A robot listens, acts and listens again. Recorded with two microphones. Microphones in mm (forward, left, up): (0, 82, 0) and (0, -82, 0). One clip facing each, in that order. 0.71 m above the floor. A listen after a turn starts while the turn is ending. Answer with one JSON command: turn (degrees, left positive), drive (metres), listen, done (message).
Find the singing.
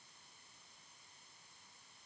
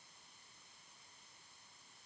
{"listen": true}
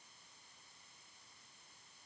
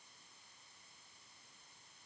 {"listen": true}
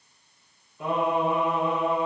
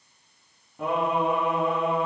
{"turn": -70}
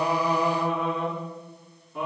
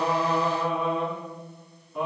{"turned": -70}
{"done": "Found it: singing, straight ahead."}